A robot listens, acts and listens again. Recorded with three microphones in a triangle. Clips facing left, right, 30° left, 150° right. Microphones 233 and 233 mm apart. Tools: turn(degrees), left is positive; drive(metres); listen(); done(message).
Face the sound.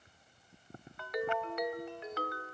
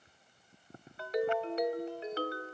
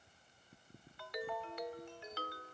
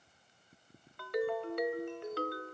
turn(degrees=-145)
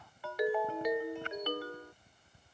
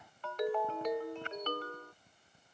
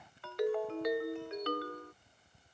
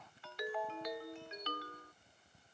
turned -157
turn(degrees=10)
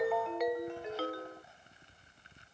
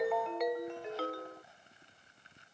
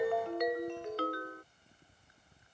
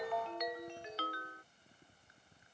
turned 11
done("Found it: a ringtone, straight ahead.")